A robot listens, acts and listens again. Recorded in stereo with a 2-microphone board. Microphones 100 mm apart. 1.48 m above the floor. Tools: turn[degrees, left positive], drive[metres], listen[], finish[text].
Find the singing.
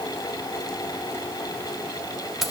Action: listen[]
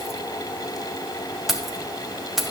Action: listen[]
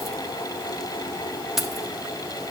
Action: finish[I can't make out singing, only keys jangling.]